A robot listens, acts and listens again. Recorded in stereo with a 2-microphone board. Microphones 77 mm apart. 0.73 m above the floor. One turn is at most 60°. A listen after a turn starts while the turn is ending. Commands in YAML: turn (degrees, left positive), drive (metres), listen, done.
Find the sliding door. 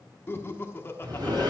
turn: -60
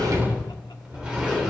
turn: -15
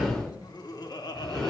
done: "Facing the sliding door."